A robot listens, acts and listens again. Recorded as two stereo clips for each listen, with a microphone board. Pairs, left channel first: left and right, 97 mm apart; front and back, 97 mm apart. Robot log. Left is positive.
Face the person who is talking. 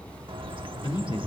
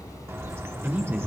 note: The man speaking: 105° left.
cmd yaw +105
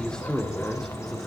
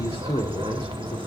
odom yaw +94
end: Facing the man speaking.